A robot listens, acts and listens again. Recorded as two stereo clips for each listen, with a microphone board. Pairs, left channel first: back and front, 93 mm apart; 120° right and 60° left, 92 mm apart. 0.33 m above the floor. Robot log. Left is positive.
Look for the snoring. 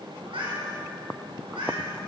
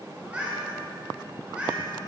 cmd idle
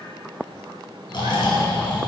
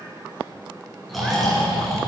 note: The snoring: 150° left.
cmd yaw +150
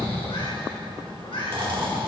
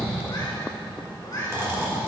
end: Found it: snoring, straight ahead, 2 to 4 m away.